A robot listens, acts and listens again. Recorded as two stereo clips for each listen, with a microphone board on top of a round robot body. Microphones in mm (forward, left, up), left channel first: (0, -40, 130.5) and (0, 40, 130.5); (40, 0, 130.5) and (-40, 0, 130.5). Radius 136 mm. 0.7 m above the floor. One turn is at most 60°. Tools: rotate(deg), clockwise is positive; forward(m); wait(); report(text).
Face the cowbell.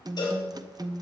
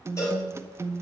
rotate(50)
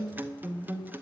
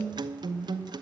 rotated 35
rotate(15)
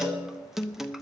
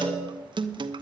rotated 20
wait()
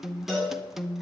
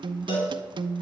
report("Found it: a cowbell, straight ahead, over 4 m away.")